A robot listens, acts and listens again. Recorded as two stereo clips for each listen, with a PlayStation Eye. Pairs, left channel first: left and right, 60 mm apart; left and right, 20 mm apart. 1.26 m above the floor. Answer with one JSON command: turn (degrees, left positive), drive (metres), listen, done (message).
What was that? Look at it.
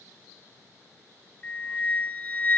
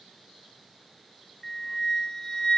{"turn": 25}
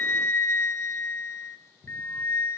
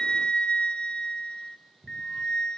{"turn": 125}
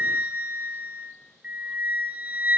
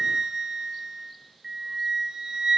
{"turn": -30}
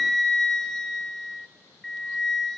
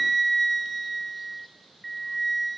{"turn": 10}
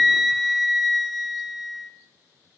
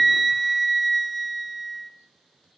{"done": "Found it: a flute, straight ahead, 1 to 2 m away."}